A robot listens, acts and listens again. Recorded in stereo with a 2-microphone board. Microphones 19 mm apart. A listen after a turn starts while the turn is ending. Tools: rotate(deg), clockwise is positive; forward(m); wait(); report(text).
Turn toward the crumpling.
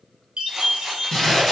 rotate(-30)
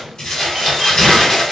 rotate(-135)
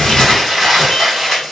report("Found it: crumpling, straight ahead, 1 to 2 m away.")